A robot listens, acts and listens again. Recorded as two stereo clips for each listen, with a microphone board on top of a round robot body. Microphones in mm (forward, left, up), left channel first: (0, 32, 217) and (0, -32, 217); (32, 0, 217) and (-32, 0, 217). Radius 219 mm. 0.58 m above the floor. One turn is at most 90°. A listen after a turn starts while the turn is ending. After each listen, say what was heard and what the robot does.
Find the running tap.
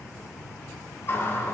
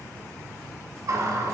The running tap: 145° left. Turn 90° left.
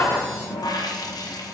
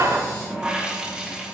The running tap is now 105° left. Turn 90° left.
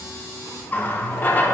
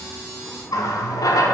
The running tap is now 25° left. Turn 25° left.
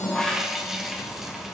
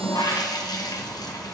Found it: a running tap, straight ahead.